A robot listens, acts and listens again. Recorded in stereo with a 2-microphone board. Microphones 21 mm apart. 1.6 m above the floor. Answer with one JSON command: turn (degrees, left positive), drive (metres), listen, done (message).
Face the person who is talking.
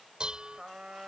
{"listen": true}
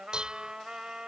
{"listen": true}
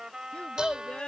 {"turn": 60}
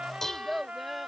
{"done": "Found it: a child speaking, straight ahead."}